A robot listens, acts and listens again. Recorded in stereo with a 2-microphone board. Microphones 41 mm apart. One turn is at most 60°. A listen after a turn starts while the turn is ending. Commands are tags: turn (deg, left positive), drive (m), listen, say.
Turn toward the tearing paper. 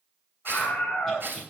<turn deg="-55"/>
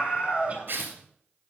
<turn deg="-60"/>
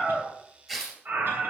<turn deg="-10"/>
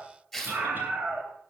<say>Facing the tearing paper.</say>